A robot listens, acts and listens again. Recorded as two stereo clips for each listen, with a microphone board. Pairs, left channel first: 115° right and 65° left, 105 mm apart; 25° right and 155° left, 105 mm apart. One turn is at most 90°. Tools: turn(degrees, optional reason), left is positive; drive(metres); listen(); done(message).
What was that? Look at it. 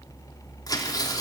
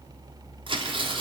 turn(degrees=-90, reason="The tearing paper: 165° right.")
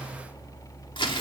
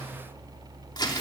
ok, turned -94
turn(degrees=-70, reason="The tearing paper is now 70° right.")
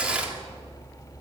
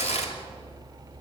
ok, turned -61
turn(degrees=-10, reason="The tearing paper is now 10° right.")
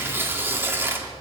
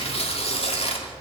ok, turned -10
done("Facing the tearing paper, 2 to 4 m away.")